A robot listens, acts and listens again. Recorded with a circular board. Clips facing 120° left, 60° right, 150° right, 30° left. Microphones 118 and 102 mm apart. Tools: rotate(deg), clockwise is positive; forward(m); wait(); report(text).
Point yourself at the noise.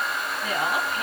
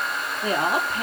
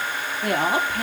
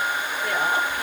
rotate(115)
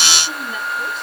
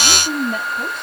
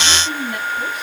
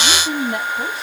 rotate(25)
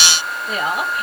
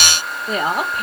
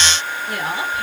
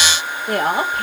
rotate(10)
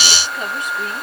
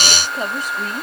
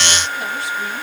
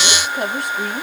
report("Facing the woman speaking.")